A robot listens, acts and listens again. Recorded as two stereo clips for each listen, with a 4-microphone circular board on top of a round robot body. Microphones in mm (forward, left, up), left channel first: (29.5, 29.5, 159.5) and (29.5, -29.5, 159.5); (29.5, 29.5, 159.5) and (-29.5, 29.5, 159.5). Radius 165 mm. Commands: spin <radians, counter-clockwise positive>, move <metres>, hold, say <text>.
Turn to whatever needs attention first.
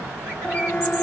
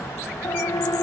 spin 0.52
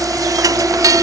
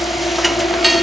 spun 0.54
hold
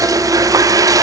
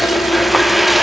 hold
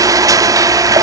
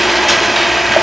say I heard a siren from this way, but can't make it out now.